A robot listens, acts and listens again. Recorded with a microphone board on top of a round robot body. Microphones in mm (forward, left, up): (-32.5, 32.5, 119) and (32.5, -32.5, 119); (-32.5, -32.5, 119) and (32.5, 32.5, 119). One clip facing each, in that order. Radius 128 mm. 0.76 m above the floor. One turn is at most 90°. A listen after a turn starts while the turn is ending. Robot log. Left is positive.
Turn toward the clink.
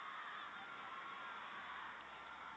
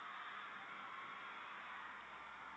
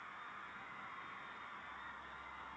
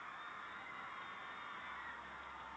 cmd idle
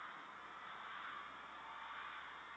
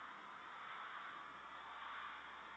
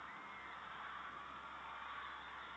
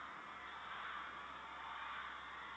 cmd idle
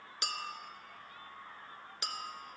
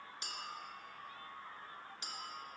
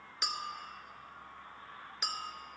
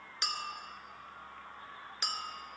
note: The clink: 140° left.
cmd yaw +90
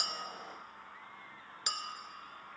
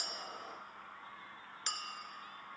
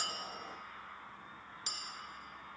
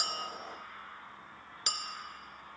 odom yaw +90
note: The clink is now 60° left.
cmd yaw +60
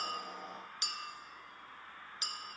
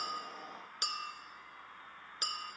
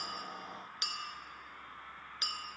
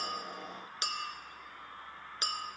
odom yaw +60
note: The clink is now 10° right.
cmd yaw -10
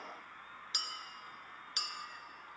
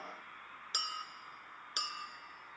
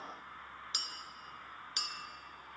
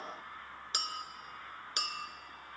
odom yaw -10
end: Facing the clink.